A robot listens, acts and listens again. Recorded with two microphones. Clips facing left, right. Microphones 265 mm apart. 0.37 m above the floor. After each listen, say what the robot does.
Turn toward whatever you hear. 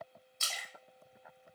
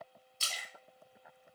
Turn 40° right.
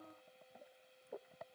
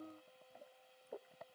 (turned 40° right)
Keep listening.
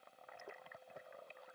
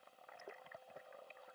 I heard a splash, but can't make it out now. It was about straight ahead or 100° right.